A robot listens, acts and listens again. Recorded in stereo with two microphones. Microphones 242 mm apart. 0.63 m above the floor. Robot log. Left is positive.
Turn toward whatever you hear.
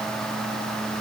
cmd idle
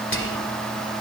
note: The whispering: about 55° left or 125° left.
cmd yaw +55
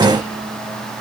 cmd idle
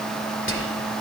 note: So it is at 65° left.
cmd yaw +65
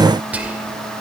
end: Facing the whispering, 2 to 4 m away.